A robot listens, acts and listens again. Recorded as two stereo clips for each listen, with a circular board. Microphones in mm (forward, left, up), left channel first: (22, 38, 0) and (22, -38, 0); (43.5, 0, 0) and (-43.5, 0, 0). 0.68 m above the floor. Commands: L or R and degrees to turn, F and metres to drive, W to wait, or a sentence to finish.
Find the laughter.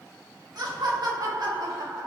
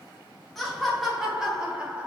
R110
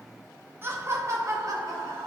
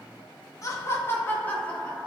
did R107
R80
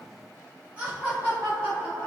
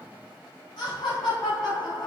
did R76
R30
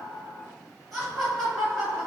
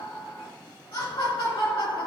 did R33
Facing the laughter.